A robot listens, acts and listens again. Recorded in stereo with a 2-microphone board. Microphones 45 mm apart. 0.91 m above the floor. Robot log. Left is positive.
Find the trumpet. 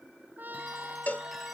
note: The trumpet: about 40° right or 140° right.
cmd yaw -40
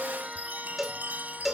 cmd idle
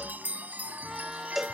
cmd idle
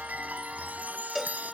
end: I heard a trumpet, but can't make it out now. It was about straight ahead or 100° right.